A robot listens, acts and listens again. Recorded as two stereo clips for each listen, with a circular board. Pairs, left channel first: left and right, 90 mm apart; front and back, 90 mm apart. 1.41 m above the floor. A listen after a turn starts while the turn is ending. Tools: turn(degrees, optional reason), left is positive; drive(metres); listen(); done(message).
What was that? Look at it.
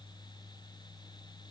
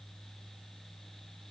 listen()
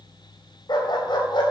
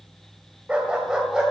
turn(degrees=95, reason="The dog barking: 95° left.")
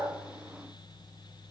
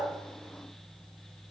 listen()
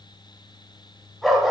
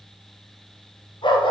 done("Found it: a dog barking, straight ahead, 2 to 4 m away.")